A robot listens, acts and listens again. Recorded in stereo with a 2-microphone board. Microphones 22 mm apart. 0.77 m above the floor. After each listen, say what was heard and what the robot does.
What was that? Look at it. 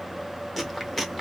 Turn 30° left.
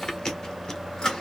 So it is at 145° left. Turn 145° left.
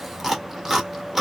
The chewing is now 15° right. Turn 15° right.
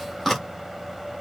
Found it: chewing, straight ahead.